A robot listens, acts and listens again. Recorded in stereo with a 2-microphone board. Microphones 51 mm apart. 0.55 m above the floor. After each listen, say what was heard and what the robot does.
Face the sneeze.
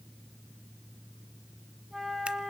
Keep listening.
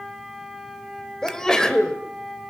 Turn 30° left.
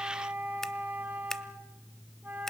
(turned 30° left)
Keep listening.
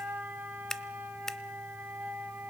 I heard a sneeze, but can't make it out now. It was about 20° right or 140° left.